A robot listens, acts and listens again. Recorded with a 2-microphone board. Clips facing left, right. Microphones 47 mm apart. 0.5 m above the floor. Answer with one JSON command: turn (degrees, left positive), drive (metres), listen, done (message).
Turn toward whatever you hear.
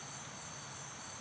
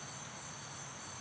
{"listen": true}
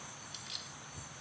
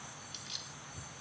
{"turn": 30}
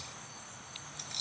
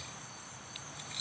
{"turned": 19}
{"turn": -15}
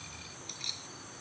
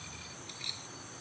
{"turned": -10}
{"turn": -10}
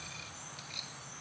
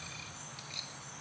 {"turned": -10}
{"listen": true}
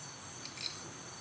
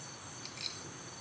{"listen": true}
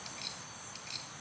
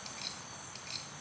{"done": "Facing where the keys jangling came from. I can't hear it now."}